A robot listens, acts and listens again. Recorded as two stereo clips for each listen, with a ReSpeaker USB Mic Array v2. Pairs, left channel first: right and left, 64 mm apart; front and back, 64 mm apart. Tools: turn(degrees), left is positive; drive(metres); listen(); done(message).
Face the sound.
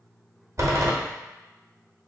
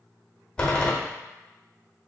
turn(degrees=70)
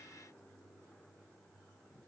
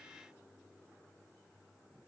done("Facing where the door slam came from. I can't hear it now.")